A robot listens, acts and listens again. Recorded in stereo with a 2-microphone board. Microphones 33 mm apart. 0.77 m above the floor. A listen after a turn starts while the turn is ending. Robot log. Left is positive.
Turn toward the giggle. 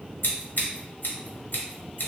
cmd idle
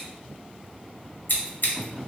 cmd idle
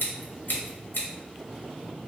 end: I can't make out a giggle, only scissors.